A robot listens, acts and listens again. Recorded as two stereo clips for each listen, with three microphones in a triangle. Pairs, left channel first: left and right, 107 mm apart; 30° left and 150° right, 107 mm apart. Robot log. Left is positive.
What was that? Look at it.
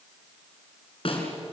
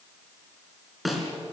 note: The snare drum: 120° left.
cmd yaw +120
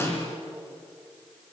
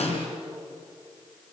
note: The snare drum is now 25° left.
cmd yaw +25
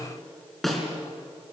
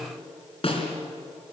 end: Facing the snare drum.